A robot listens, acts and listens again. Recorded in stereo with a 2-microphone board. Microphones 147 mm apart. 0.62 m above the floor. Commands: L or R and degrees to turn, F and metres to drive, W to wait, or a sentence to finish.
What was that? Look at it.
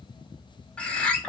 L30
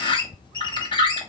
L140
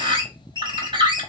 R40
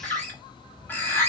L15
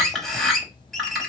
Facing the bird.